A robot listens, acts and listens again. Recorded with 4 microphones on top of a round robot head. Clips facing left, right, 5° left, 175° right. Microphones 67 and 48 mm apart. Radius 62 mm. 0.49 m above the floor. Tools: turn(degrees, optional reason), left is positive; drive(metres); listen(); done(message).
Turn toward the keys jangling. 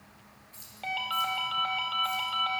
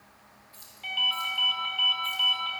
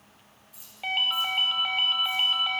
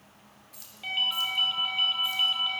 turn(degrees=160, reason="The keys jangling: 160° left.")
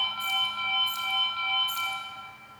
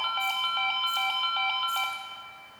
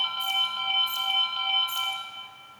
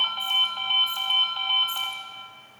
listen()
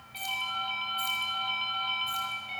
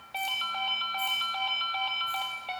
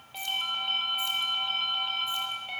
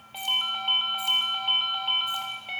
listen()
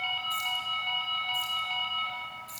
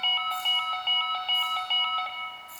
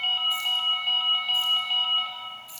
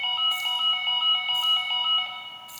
turn(degrees=65, reason="The keys jangling is now 65° left.")
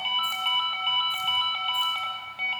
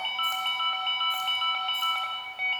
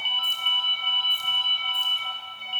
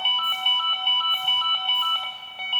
listen()
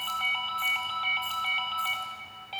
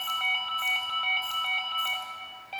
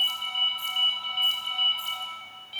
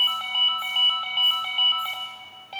listen()
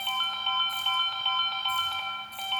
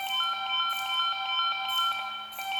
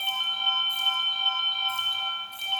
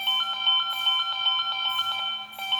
done("Facing where the keys jangling came from. I can't hear it now.")